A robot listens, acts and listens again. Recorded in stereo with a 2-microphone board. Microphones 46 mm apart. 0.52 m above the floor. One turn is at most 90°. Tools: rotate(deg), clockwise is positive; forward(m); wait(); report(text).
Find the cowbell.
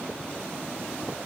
wait()
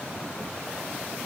wait()
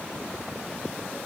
report("I can't make out a cowbell to turn to.")